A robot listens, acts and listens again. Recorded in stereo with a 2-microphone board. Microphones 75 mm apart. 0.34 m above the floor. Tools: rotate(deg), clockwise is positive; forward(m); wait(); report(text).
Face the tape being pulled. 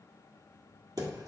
wait()
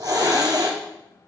wait()
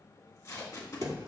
rotate(-50)
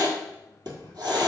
wait()
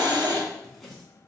report("Found it: tape being pulled, straight ahead, 1 to 2 m away.")